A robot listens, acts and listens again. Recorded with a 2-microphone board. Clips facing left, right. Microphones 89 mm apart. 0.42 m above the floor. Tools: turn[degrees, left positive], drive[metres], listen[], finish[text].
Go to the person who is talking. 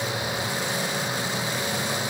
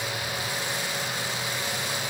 Action: listen[]
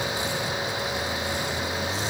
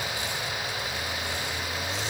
Action: listen[]
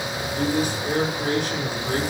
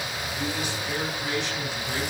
Thought: The man speaking: about 50° left or 130° left.
Action: turn[50]
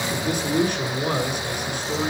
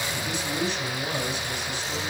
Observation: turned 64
Thought: So it is at 60° left.
Action: turn[60]
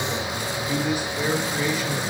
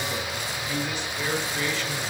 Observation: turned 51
Thought: The man speaking is now 10° left.
Action: turn[10]
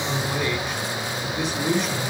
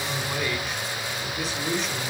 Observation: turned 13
Action: drive[1.0]
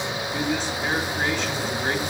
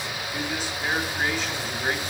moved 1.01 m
Action: drive[1.0]
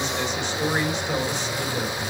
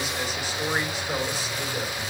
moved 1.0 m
Thought: The man speaking is now 10° right.
Action: turn[-10]
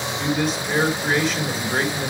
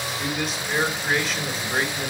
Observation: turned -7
Action: drive[1.0]
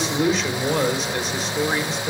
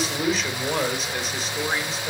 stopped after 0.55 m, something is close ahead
Action: finish[Arrived at the man speaking, straight ahead.]